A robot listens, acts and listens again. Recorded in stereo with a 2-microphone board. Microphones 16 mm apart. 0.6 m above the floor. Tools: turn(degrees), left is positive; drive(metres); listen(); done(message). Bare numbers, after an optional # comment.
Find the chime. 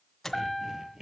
# The chime: about 20° left or 160° left.
turn(20)
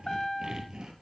# So it is at 135° left.
turn(135)
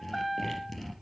done("Facing the chime.")